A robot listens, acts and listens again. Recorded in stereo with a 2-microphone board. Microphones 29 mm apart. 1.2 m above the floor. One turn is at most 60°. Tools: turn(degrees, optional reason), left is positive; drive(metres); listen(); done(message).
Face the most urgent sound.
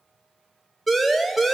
turn(degrees=30)
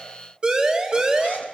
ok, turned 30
turn(degrees=-20, reason="So it is at 20° right.")
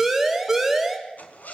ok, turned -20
done("Found it: a siren, straight ahead.")